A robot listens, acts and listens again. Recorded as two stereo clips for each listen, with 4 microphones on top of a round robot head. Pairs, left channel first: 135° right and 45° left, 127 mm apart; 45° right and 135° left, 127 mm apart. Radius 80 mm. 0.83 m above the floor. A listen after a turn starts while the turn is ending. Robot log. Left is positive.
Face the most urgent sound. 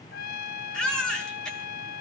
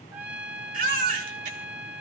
note: The baby crying: 140° left.
cmd yaw +140
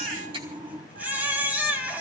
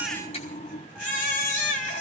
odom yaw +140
note: The baby crying is now 30° right.
cmd yaw -30
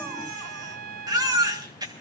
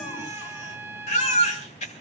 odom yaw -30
note: The baby crying is now 15° right.
cmd yaw -15
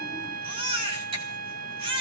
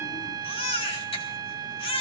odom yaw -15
end: Facing the baby crying.